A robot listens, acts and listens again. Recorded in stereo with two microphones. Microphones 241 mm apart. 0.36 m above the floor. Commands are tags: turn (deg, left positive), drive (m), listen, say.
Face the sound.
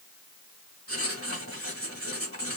<turn deg="-65"/>
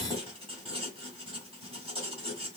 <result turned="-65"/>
<turn deg="-25"/>
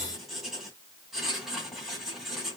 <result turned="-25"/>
<say>Found it: writing, straight ahead, 2 to 4 m away.</say>